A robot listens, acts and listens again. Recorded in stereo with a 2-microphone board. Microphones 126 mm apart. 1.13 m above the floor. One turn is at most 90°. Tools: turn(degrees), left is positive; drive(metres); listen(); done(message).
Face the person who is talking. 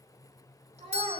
turn(degrees=-55)
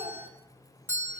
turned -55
listen()
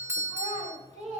turn(degrees=-70)
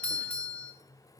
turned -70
listen()
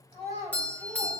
turn(degrees=-35)
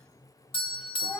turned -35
done("Found it: a child speaking, straight ahead.")